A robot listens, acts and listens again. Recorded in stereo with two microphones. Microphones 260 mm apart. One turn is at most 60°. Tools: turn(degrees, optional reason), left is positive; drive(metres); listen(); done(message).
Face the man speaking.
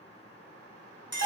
listen()
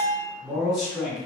turn(degrees=30)
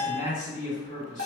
turn(degrees=60, reason="So it is at 150° left.")
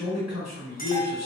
turn(degrees=60, reason="The man speaking is now 100° left.")
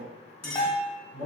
turn(degrees=60, reason="The man speaking is now 60° left.")
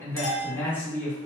turn(degrees=10, reason="The man speaking is now 10° left.")
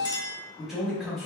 done("Facing the man speaking.")